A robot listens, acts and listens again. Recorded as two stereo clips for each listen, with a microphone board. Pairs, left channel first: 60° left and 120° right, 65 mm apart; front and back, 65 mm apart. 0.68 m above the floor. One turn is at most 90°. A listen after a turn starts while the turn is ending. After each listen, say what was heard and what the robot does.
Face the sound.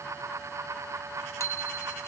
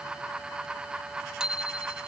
The bicycle bell: 105° left. Turn 90° left.
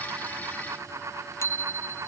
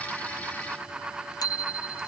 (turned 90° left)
The bicycle bell is now 15° left. Turn 15° left.
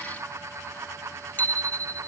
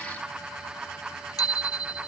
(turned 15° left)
Facing the bicycle bell.